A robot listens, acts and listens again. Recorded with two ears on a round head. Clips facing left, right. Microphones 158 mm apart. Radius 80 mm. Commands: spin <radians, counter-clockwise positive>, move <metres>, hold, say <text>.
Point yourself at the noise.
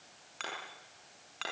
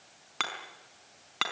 spin -1.22
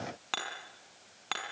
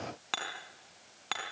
say Facing the hammering.